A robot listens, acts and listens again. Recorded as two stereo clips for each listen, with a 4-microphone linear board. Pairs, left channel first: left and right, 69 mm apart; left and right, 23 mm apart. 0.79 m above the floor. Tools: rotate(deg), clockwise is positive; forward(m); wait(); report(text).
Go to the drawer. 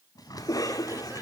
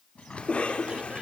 rotate(-65)
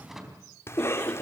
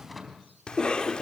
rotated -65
forward(1.0)
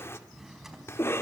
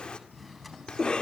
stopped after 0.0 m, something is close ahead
report("Something is in my way. I am facing the drawer but have not reached it.")